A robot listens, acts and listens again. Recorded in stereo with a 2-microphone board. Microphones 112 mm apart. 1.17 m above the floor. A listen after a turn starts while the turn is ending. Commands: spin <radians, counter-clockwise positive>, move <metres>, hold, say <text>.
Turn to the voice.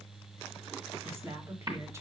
spin -0.44
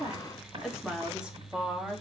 spin -0.52
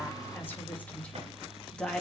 say Found it: a woman speaking, straight ahead.